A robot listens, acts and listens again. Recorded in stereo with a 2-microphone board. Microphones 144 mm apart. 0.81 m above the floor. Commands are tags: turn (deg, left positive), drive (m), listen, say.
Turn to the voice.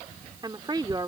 <turn deg="-30"/>
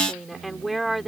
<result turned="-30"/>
<say>Found it: a woman speaking, straight ahead.</say>